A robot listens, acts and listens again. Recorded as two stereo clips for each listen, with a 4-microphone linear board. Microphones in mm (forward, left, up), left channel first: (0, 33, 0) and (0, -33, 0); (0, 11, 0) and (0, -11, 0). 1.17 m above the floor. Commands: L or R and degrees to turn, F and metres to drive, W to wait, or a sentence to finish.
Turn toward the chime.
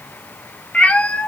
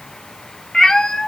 W
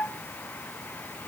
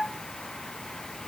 W
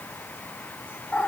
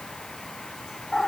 I can't make out a chime to turn to.